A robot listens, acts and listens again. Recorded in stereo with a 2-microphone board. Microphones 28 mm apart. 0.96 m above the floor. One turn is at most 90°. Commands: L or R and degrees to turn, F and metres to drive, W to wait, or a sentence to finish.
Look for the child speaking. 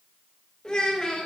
L30
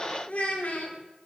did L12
L60
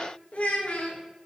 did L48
L50
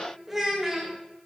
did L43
R10
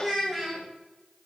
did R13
Facing the child speaking.